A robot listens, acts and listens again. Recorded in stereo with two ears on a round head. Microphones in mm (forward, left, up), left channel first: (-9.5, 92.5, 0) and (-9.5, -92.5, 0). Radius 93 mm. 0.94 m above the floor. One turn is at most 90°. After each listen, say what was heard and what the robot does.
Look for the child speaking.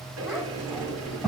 Turn 30° left.
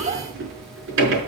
So it is at 30° right. Turn 30° right.
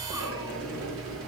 Keep listening.
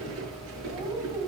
The child speaking is now 20° right. Turn 20° right.
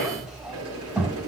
Found it: a child speaking, straight ahead.